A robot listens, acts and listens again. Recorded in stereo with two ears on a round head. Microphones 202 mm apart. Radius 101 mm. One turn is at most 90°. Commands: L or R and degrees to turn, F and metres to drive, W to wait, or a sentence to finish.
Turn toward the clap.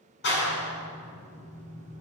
L55
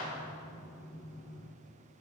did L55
L70
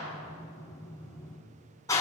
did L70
L15
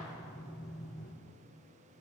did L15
Facing the clap, over 4 m away.